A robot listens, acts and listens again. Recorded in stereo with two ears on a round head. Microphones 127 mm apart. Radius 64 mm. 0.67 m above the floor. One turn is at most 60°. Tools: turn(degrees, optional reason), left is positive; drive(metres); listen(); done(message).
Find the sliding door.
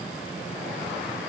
listen()
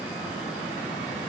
listen()
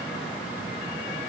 done("I can't make out a sliding door to turn to.")